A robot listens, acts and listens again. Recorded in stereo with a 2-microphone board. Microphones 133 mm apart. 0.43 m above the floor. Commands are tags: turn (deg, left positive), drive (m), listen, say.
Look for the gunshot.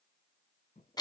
<listen/>
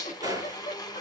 <turn deg="-25"/>
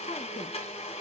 <listen/>
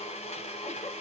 <say>I heard a gunshot, but can't make it out now. It was about straight ahead or 130° right.</say>